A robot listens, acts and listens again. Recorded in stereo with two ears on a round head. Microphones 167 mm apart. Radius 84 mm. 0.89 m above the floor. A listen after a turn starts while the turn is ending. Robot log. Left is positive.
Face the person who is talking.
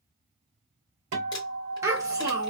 note: The child speaking: about 15° right or 165° right.
cmd yaw -15
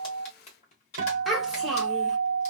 end: Found it: a child speaking, straight ahead, 1 to 2 m away.